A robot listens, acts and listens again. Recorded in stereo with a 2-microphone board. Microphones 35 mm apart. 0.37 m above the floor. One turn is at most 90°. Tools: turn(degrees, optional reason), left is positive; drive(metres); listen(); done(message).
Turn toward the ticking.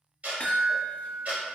turn(degrees=-50, reason="The ticking: about 50° right or 130° right.")
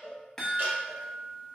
listen()
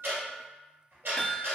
turn(degrees=-80, reason="So it is at 80° right.")
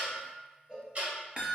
turn(degrees=-40, reason="The ticking is now 40° right.")
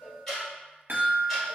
turn(degrees=10, reason="The ticking is now 10° left.")
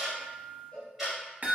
done("Found it: ticking, straight ahead, 1 to 2 m away.")